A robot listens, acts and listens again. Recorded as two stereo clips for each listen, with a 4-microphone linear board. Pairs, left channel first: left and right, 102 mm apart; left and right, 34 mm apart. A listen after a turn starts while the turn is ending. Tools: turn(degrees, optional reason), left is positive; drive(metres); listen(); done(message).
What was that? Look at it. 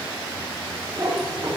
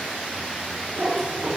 turn(degrees=-45, reason="The cat meowing: about 45° right or 135° right.")
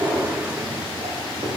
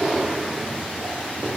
turn(degrees=-80, reason="So it is at 80° right.")
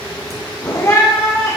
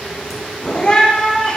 turn(degrees=30, reason="The cat meowing is now 30° left.")
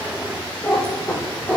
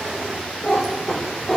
turn(degrees=10, reason="The cat meowing is now 10° left.")
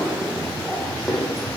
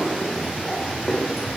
done("Facing the cat meowing, 2 to 4 m away.")